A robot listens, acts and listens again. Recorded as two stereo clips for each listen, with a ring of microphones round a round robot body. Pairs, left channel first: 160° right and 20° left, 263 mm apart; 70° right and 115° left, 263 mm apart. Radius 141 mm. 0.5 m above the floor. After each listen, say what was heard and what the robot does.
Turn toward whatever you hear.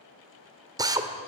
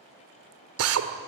The drill: 95° left. Turn 95° left.
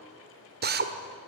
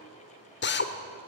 The drill is now 25° right. Turn 25° right.
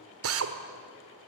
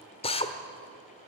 Found it: a drill, straight ahead, 1 to 2 m away.